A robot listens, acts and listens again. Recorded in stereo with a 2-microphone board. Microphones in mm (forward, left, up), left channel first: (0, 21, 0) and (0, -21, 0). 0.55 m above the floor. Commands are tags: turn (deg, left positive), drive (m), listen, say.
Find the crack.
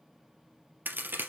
<turn deg="-55"/>
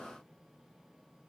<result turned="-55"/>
<listen/>
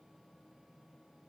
<say>I heard a crack, but can't make it out now. It was about straight ahead or 70° right.</say>